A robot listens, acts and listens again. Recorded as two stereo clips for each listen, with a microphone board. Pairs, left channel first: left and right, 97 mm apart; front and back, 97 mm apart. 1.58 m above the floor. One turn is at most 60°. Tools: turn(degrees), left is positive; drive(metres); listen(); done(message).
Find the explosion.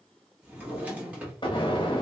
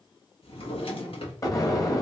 turn(degrees=55)
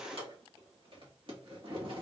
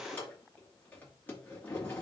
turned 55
done("I heard an explosion from this way, but can't make it out now.")